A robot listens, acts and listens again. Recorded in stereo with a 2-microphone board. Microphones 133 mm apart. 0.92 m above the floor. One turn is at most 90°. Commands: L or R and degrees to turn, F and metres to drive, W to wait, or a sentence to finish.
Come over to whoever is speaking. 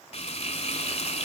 W
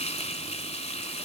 W
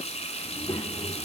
L30
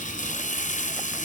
W
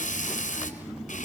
F1.0
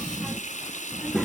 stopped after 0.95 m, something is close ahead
Arrived at the child speaking, straight ahead.